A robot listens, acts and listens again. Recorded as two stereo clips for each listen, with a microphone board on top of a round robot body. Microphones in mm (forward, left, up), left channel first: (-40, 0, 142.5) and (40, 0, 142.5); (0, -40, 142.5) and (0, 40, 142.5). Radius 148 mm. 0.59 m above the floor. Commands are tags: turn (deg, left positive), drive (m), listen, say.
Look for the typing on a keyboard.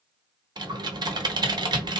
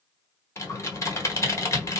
<turn deg="-35"/>
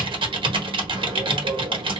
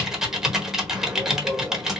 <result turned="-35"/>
<turn deg="10"/>
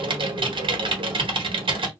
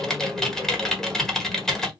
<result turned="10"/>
<say>Found it: typing on a keyboard, straight ahead, 1 to 2 m away.</say>